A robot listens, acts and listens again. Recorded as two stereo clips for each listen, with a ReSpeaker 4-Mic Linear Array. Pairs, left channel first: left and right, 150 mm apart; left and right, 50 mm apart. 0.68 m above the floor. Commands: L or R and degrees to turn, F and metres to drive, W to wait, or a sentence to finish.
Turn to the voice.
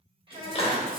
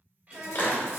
R35
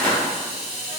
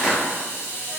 W
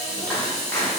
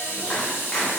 W
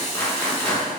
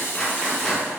I heard a child speaking, but can't make it out now. It was about straight ahead or 110° right.